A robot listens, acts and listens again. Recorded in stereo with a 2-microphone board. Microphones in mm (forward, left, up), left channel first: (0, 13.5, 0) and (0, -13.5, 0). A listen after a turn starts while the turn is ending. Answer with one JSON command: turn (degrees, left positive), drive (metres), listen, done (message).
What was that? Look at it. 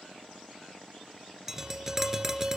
{"turn": -30}
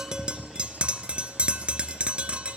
{"turn": -135}
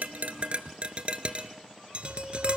{"turn": -50}
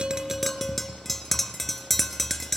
{"done": "Facing the tapping, 1 to 2 m away."}